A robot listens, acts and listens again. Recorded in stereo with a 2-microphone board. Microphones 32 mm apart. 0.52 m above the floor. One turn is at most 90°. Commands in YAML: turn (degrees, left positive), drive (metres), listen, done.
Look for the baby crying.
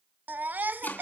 turn: -65
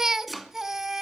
turn: -15
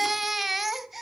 done: "Facing the baby crying, under 1 m away."